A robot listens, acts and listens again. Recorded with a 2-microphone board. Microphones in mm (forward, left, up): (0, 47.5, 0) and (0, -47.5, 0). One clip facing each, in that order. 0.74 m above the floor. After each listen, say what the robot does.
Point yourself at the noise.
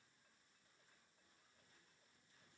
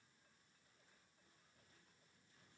Keep listening.
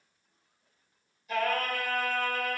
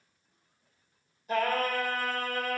Turn 40° right.
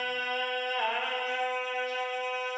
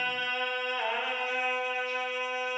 Facing the singing, 2 to 4 m away.